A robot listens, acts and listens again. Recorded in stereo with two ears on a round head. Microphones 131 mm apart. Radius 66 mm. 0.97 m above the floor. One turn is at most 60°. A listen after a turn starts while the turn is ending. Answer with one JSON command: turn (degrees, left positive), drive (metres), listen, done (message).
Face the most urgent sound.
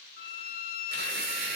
{"listen": true}
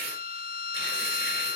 {"listen": true}
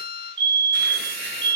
{"turn": -35}
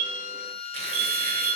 {"turn": -60}
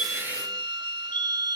{"turn": -30}
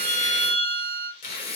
{"turn": 10}
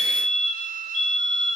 {"done": "Found it: a fire alarm, straight ahead."}